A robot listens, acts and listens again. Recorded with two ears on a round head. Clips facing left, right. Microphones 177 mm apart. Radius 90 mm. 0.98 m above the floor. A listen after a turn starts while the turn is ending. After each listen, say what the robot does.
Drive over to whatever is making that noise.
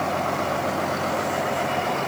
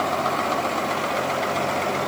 Keep listening.
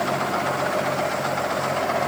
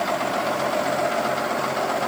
Keep listening.
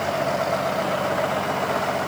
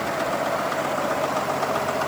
I can't make out anything.